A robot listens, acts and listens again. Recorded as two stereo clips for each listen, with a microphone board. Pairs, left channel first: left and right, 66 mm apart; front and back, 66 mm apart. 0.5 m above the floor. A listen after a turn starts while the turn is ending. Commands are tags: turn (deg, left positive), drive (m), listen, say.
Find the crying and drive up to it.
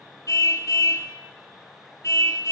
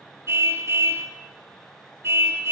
<listen/>
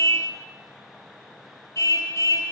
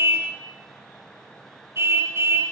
<listen/>
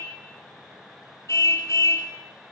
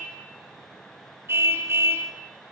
<say>I can't make out crying, only a car horn.</say>